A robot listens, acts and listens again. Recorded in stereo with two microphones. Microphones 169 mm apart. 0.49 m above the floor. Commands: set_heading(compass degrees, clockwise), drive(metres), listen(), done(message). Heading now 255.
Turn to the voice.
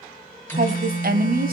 set_heading(315)
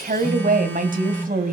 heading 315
set_heading(10)
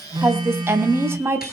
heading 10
set_heading(25)
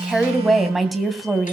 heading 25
done("Facing the woman speaking, 2 to 4 m away.")